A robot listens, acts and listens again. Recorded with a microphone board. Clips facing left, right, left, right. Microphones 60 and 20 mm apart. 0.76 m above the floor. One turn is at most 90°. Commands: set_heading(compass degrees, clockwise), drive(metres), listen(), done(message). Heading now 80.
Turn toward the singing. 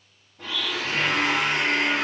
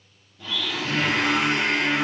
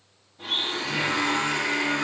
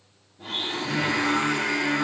set_heading(110)
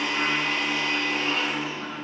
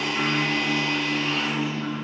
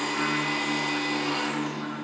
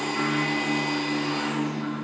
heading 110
set_heading(70)
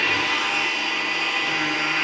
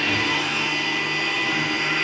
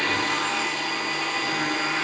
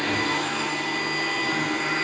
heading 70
listen()
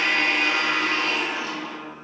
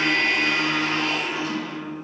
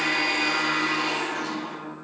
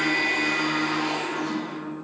set_heading(35)
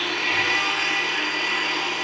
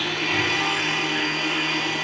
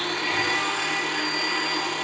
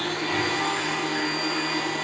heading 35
listen()
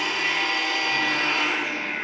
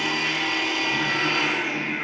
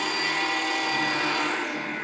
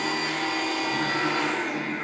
done("Found it: singing, straight ahead.")